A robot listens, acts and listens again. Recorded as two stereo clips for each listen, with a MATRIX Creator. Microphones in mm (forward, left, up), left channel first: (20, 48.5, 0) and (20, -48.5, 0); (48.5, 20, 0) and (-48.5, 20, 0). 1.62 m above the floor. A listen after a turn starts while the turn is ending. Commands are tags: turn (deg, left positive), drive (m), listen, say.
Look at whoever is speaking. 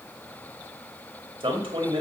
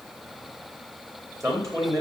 <turn deg="-125"/>
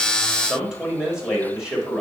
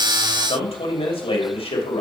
<turn deg="-10"/>
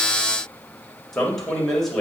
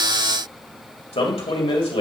<say>Facing the man speaking, 2 to 4 m away.</say>